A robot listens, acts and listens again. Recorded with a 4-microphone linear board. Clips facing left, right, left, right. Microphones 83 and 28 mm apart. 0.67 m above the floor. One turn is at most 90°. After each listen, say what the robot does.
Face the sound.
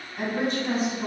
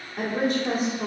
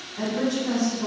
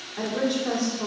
Turn 65° right.
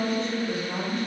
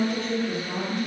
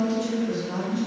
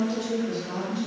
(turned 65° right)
Turn 15° right.
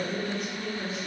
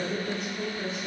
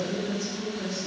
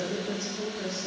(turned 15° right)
Found it: a woman speaking, straight ahead, 1 to 2 m away.